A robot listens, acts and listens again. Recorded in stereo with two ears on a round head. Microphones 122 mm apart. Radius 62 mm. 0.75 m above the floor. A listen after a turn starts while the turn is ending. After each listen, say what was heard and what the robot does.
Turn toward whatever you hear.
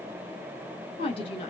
The woman speaking: about 45° left or 135° left. Turn 45° left.
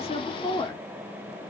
So it is at 25° left. Turn 25° left.
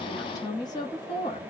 The woman speaking is now 40° left. Turn 40° left.
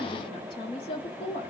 The woman speaking is now 45° left. Turn 45° left.
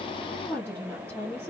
The woman speaking is now 15° left. Turn 15° left.
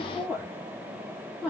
Facing the woman speaking.